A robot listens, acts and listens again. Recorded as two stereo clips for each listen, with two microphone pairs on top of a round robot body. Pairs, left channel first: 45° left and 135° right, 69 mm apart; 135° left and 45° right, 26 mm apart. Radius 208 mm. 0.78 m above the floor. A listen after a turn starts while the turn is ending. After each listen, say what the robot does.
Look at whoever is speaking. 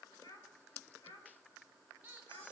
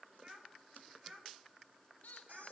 Turn 10° left.
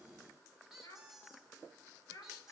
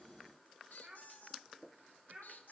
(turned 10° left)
Facing the child speaking, over 4 m away.